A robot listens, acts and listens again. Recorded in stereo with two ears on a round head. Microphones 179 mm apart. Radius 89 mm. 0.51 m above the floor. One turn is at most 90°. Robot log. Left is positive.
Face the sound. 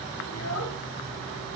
cmd yaw +90
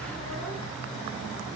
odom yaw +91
cmd idle
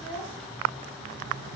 end: Found it: a child speaking, straight ahead, over 4 m away.